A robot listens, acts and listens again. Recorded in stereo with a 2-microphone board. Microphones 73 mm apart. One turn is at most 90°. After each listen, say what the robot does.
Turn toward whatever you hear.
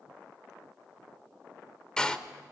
Turn 30° left.
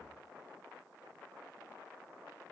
Keep listening.
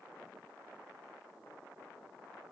I heard a door slam, but can't make it out now. It was about 20° right or 140° left.